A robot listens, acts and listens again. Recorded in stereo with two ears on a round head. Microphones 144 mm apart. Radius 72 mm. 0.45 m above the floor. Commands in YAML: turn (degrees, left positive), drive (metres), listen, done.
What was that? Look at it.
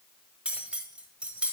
turn: -30
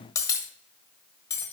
turn: 20
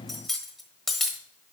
done: "Facing the cutlery clinking, 1 to 2 m away."